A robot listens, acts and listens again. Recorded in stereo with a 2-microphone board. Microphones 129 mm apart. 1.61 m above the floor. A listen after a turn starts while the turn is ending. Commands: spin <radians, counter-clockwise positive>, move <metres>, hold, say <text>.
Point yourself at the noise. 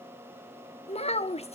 spin 1.05
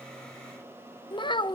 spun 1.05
spin 0.79
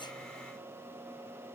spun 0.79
hold
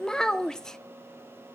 say Facing the child speaking, under 1 m away.